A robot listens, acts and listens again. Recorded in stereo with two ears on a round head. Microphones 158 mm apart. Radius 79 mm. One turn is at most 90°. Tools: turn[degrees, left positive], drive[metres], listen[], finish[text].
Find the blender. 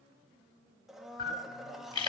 Action: turn[30]
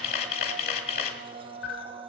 Thought: So it is at 35° right.
Action: turn[-35]
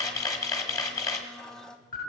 Action: finish[Facing the blender.]